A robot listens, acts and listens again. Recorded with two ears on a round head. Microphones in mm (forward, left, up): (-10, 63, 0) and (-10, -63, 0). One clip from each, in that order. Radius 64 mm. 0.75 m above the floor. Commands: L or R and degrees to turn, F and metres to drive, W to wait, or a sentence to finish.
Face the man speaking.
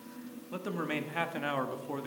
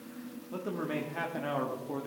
L50
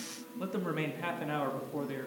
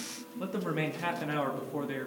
R20
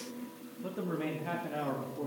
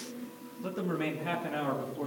R35
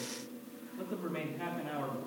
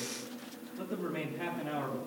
Found it: a man speaking, straight ahead.